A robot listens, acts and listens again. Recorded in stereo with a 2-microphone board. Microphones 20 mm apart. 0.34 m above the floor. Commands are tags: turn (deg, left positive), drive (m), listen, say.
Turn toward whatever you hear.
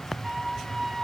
<turn deg="-30"/>
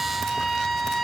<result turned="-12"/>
<turn deg="-160"/>
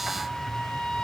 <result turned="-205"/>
<turn deg="45"/>
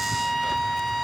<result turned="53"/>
<say>Facing the trumpet.</say>